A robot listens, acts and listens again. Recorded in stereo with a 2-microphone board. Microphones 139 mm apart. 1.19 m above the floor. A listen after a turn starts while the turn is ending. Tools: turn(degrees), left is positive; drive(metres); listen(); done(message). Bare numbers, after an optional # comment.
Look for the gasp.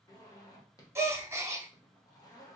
# The gasp: about 20° right or 160° right.
turn(-20)
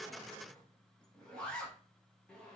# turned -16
listen()
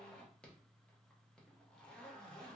done("I heard a gasp, but can't make it out now. It was about straight ahead or 145° right.")